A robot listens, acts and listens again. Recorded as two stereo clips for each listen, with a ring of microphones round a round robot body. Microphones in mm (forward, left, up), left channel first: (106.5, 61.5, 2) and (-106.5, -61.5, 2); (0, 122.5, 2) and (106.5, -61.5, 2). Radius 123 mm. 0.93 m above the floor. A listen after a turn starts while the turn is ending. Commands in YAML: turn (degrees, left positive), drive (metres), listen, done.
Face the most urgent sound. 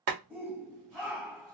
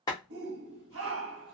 turn: -65
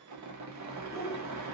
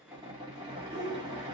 turn: -35
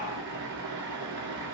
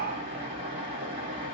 listen: true
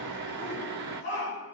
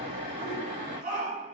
turn: -10
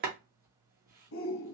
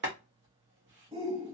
done: "Facing the shout, under 1 m away."